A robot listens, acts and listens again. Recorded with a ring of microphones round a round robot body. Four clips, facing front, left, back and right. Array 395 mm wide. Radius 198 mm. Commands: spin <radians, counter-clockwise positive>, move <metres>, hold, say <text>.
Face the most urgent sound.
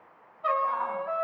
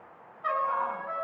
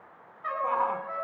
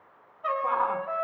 spin -2.18
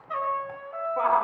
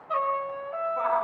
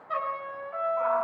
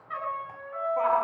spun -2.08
spin -0.17
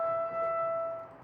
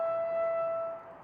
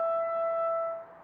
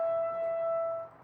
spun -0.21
hold
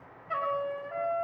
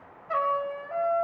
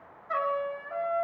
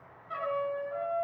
hold
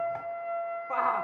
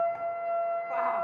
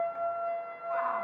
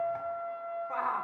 say Found it: a shout, straight ahead.